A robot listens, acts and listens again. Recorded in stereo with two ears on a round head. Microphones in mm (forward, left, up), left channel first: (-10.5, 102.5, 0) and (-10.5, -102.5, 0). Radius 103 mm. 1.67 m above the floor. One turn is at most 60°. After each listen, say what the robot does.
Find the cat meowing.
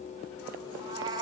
Turn 20° right.
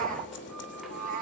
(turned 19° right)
Turn 60° right.
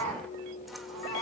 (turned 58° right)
Turn 60° right.
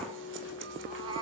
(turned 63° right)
Turn 15° right.
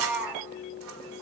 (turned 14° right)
Facing the cat meowing.